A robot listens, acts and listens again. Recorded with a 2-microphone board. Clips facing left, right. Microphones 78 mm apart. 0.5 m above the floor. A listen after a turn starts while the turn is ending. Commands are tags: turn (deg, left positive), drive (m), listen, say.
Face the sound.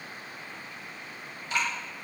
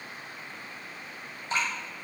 <turn deg="-35"/>
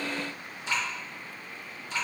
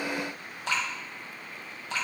<turn deg="-110"/>
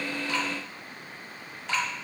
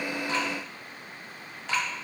<say>Facing the dripping.</say>